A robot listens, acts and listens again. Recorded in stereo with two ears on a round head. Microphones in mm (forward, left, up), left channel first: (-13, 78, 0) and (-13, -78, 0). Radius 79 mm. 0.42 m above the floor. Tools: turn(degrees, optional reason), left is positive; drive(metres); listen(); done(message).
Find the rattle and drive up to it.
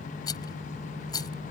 turn(degrees=25, reason="The rattle: about 25° left or 155° left.")
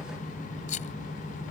turn(degrees=130, reason="So it is at 130° left.")
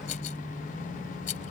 turn(degrees=50, reason="The rattle is now 50° left.")
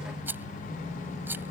turn(degrees=-10, reason="The rattle is now 10° right.")
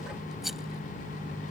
drive(metres=1.0)
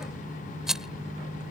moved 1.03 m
drive(metres=1.0)
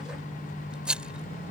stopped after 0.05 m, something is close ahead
done("I am next to the rattle.")